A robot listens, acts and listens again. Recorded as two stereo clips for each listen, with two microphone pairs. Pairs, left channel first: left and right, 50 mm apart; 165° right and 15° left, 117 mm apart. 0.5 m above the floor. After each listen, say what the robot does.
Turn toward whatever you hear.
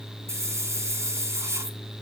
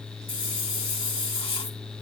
Turn 115° right.
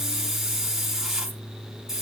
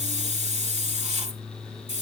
Turn 10° right.
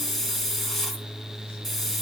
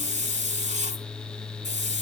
Facing the hiss, 2 to 4 m away.